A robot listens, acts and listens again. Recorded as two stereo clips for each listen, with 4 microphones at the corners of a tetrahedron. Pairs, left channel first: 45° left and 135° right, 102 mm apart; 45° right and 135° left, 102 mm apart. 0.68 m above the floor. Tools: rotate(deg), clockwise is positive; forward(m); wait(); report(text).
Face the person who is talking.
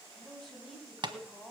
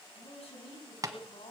rotate(40)
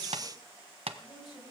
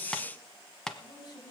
report("Found it: a man speaking, straight ahead.")